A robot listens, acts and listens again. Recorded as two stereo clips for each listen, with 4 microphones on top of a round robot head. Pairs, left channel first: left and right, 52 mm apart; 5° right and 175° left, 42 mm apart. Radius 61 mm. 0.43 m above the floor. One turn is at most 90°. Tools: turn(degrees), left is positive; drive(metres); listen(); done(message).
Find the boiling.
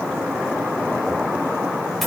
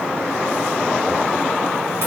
listen()
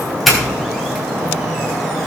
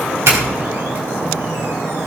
listen()
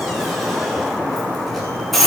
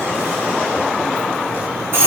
done("I can't make out boiling to turn to.")